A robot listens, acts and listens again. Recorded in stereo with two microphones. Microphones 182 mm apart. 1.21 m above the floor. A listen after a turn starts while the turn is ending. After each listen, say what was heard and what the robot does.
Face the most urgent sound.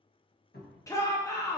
The shout: about 15° left or 165° left. Turn 15° left.
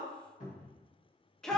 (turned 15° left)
Found it: a shout, straight ahead, 1 to 2 m away.